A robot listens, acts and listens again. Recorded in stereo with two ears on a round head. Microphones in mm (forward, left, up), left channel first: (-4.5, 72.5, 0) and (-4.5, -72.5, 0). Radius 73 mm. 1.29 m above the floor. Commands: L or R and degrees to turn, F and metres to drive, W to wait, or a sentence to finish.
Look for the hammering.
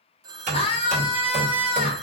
R50
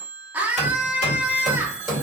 Facing the hammering, 2 to 4 m away.